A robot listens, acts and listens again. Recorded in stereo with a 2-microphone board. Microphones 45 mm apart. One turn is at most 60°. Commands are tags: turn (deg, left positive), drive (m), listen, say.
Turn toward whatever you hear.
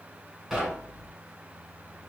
<turn deg="30"/>
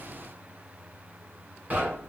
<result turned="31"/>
<turn deg="-30"/>
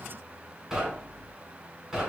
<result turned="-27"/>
<say>Facing the knocking.</say>